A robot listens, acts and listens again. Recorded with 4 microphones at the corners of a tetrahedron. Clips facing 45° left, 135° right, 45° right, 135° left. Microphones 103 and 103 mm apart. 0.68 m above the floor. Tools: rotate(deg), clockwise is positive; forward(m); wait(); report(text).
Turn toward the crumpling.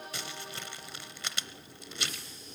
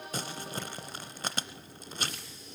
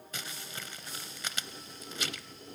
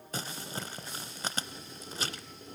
rotate(175)
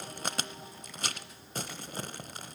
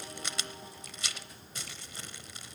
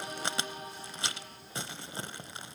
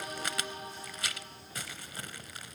rotate(-15)
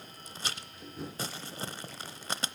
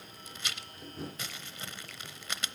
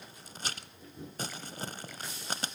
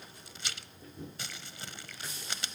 report("Facing the crumpling, under 1 m away.")